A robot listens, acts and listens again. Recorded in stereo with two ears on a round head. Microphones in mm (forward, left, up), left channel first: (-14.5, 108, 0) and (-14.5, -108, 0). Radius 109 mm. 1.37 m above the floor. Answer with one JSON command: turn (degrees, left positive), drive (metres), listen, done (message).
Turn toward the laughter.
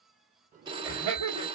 {"turn": -90}
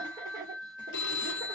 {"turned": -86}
{"turn": -15}
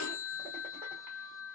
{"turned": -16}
{"listen": true}
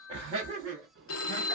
{"turn": -30}
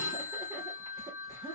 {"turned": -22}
{"turn": -10}
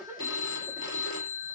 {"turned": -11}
{"done": "Facing the laughter."}